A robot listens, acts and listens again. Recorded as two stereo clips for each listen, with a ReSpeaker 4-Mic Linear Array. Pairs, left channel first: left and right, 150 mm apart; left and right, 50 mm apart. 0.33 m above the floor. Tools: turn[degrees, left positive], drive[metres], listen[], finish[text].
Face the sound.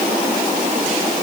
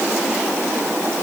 Action: listen[]
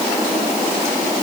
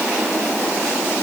Action: listen[]
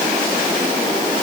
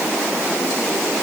Action: finish[I can't make out anything.]